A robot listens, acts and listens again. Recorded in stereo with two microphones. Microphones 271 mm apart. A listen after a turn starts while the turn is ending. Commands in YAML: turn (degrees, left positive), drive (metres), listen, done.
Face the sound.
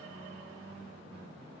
listen: true
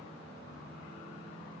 listen: true
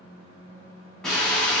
turn: 30
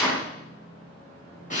turn: 150
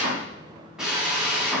done: "Facing the drill, 2 to 4 m away."